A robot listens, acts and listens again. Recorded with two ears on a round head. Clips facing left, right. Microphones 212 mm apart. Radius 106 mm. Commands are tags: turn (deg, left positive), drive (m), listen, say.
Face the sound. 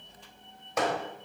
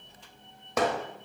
<turn deg="-65"/>
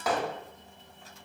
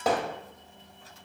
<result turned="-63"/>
<turn deg="-25"/>
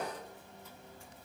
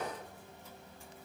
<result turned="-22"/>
<listen/>
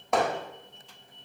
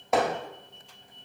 <say>Facing the hammering.</say>